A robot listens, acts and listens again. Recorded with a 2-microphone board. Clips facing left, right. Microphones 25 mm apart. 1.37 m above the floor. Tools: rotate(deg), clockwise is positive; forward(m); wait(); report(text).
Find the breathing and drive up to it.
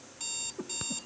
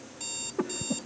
rotate(60)
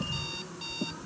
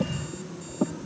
rotate(60)
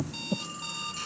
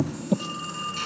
rotate(15)
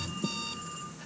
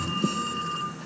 forward(1.0)
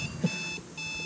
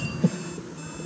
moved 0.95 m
forward(1.0)
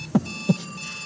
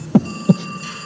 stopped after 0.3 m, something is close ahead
rotate(10)
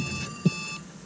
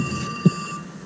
report("Arrived at the breathing, straight ahead.")